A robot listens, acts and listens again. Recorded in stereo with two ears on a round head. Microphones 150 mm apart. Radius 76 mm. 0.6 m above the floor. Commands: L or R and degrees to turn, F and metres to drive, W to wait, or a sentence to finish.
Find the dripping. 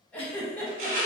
W
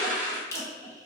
L15
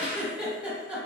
W
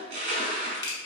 L145
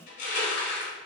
W
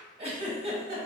W
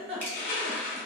Facing where the dripping came from. I can't hear it now.